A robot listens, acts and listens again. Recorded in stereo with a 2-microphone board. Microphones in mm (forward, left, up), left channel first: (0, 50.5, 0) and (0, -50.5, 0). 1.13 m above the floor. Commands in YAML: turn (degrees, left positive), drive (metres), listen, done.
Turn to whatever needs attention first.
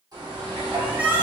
turn: -30
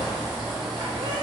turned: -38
listen: true
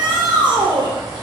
turn: -125
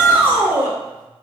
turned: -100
turn: -25
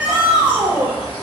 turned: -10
turn: -15
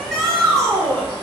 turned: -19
done: "Found it: a shout, straight ahead."